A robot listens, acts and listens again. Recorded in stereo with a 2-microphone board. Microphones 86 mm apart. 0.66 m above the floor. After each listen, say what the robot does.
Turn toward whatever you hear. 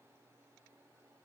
Keep listening.
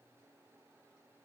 Keep listening.
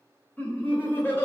Turn 25° left.
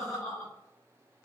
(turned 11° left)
Turn 30° left.
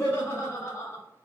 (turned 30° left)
Turn 25° left.
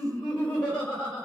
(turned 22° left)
Turn 30° left.
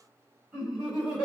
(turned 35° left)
Turn 20° right.
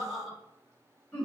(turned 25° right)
Found it: laughter, straight ahead.